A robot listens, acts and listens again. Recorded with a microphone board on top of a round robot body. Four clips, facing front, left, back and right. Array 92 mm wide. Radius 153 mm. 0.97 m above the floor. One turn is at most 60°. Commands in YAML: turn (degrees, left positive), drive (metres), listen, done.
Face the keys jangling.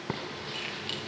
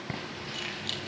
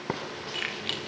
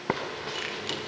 turn: -60
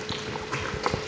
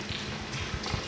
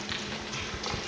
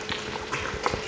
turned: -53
turn: -60
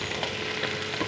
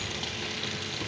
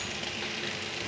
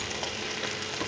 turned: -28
turn: -60
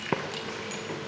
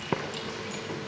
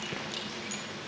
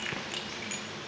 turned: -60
turn: -60
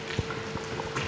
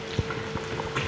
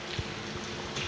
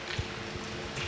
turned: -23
turn: -35
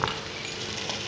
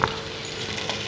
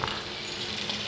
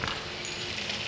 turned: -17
turn: -20
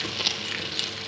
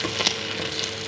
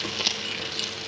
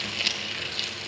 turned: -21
done: "I heard keys jangling from this way, but can't make it out now."